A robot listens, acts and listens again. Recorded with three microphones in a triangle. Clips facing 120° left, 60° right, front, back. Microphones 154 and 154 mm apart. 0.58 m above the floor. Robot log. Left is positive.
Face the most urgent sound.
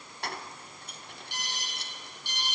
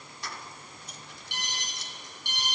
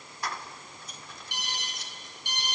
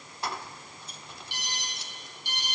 note: The alarm: 40° right.
cmd yaw -40
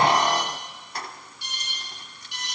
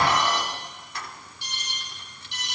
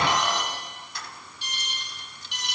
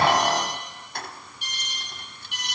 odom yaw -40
end: Facing the alarm, over 4 m away.